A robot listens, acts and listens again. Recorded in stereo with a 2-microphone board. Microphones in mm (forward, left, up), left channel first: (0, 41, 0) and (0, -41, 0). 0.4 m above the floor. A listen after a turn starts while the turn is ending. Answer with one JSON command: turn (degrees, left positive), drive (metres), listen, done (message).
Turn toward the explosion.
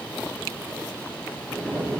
{"turn": 30}
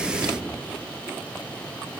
{"turn": -25}
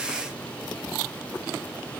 {"done": "Facing where the explosion came from. I can't hear it now."}